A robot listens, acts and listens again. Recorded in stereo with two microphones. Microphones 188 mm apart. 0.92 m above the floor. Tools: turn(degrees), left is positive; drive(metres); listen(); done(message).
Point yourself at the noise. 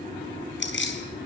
turn(degrees=90)
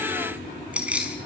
done("Facing the keys jangling, over 4 m away.")